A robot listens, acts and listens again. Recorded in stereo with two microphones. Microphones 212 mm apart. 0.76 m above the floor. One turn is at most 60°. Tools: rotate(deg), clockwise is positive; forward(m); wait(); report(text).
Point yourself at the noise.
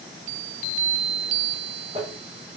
rotate(30)
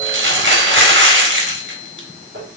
rotate(60)
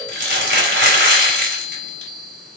rotate(60)
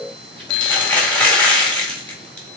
report("Found it: crumpling, straight ahead.")